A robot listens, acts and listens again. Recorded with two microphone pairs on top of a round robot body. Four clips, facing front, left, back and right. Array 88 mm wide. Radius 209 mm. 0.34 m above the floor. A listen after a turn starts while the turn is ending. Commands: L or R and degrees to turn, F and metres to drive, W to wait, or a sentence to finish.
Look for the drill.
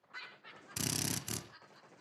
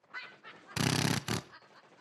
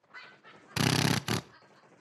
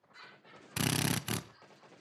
L170
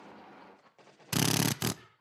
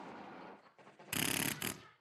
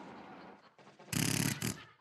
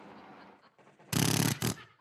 R35
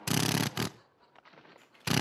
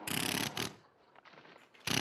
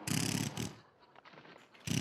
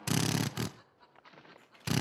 Facing the drill, under 1 m away.